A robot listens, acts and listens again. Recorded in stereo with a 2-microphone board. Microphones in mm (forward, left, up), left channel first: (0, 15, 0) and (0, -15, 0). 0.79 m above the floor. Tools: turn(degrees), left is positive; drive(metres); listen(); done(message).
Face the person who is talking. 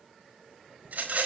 listen()
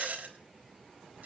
listen()
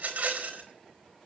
done("I can't make out anyone speaking to turn to.")